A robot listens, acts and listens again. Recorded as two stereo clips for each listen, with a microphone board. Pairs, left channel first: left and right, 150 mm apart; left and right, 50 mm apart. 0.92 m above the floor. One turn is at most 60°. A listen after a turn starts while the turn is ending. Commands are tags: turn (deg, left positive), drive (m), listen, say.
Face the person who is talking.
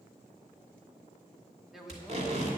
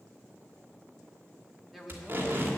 <turn deg="30"/>
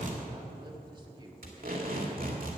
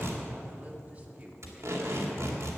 <listen/>
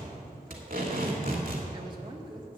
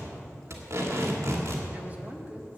<listen/>
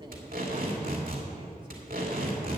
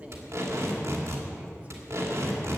<say>I heard a woman speaking, but can't make it out now. It was about 30° right or 150° left.</say>